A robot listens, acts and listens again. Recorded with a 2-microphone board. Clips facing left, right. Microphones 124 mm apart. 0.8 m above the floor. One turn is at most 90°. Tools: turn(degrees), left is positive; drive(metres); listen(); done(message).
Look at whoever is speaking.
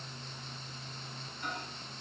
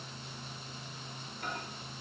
listen()
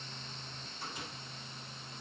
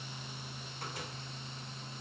listen()
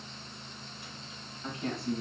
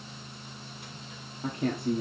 turn(degrees=-55)
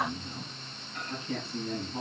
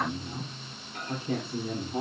turn(degrees=-65)
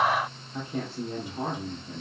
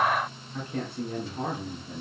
turn(degrees=10)
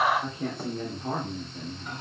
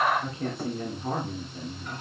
done("Found it: a man speaking, straight ahead.")